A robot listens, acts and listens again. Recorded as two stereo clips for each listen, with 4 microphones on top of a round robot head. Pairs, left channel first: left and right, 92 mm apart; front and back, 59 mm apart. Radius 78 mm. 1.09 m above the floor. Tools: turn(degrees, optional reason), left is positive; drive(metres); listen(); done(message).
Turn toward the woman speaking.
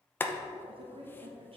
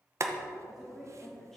turn(degrees=-85, reason="The woman speaking: 85° right.")
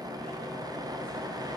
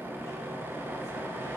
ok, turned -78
listen()
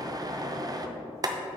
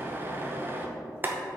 listen()
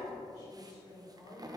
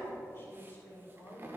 turn(degrees=40, reason="The woman speaking is now 40° left.")
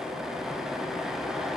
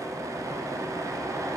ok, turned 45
listen()
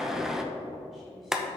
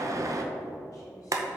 listen()
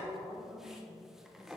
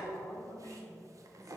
done("Found it: a woman speaking, straight ahead, 2 to 4 m away.")